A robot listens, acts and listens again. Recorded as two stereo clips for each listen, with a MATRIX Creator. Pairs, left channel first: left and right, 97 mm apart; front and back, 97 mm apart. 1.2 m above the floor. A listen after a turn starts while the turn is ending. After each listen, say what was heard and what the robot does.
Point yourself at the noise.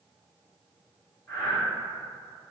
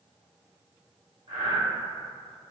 The breathing: 165° left. Turn 165° left.
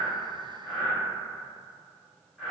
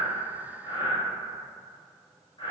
Found it: breathing, straight ahead, 1 to 2 m away.